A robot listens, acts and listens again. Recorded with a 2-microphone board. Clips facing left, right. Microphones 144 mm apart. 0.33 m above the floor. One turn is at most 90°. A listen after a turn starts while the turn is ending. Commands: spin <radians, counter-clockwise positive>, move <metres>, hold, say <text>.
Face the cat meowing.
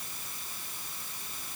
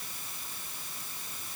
hold
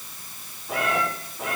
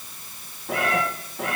spin -1.13
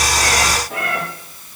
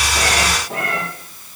spin -0.70
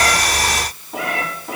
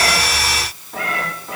spin 0.35
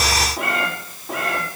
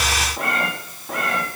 say Found it: a cat meowing, straight ahead.